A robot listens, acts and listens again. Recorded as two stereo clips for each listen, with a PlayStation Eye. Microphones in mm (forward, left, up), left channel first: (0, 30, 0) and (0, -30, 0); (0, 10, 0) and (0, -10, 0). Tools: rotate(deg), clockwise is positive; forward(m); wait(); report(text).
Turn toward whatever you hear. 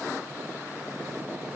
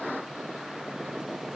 wait()
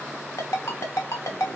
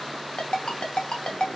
rotate(-60)
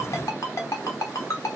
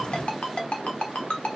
rotate(-60)
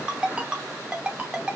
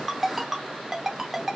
rotate(20)
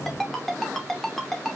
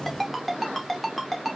report("Facing the ringtone, 1 to 2 m away.")